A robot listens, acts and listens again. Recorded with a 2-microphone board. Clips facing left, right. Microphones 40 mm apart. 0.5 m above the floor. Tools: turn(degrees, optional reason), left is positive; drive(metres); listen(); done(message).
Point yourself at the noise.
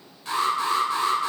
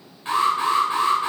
turn(degrees=-30, reason="The alarm: about 30° right or 150° right.")
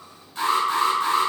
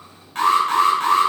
turn(degrees=-110, reason="So it is at 110° right.")
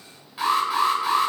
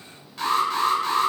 turn(degrees=15, reason="The alarm is now 15° left.")
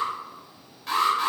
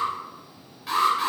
done("Facing the alarm.")